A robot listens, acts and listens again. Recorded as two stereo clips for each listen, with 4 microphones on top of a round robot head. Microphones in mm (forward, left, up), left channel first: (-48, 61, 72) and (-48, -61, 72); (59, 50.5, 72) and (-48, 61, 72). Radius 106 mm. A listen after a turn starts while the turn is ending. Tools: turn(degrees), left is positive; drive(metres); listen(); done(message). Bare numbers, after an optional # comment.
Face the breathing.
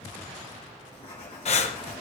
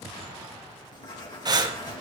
# The breathing: 125° left.
turn(125)
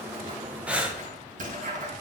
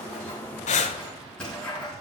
# The breathing is now 10° right.
turn(-10)
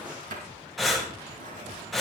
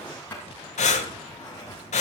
done("Facing the breathing, 1 to 2 m away.")